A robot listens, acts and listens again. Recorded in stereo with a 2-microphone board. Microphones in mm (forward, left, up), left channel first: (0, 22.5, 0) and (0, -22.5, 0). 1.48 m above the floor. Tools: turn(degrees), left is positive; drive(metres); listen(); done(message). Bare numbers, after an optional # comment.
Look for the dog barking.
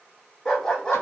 # The dog barking: about 20° left or 160° left.
turn(20)
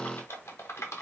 listen()
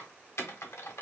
listen()
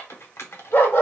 # So it is at 115° left.
turn(115)
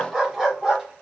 done("Facing the dog barking.")